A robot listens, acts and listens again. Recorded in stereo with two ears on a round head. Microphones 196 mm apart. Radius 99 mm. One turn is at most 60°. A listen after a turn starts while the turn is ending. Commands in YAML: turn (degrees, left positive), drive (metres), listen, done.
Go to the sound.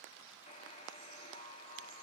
turn: 25
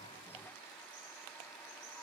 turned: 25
drive: 1.0
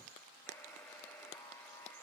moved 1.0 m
drive: 1.0
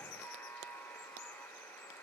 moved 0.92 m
turn: 10
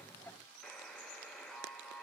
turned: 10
drive: 1.0
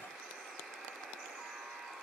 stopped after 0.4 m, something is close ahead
done: "I am next to the buzzer."